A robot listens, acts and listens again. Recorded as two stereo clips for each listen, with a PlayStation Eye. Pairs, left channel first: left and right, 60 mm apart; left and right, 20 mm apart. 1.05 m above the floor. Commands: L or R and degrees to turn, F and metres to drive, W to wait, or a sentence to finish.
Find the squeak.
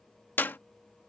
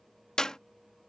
W
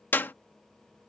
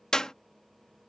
W
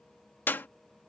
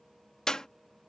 I can't make out a squeak, only a clap.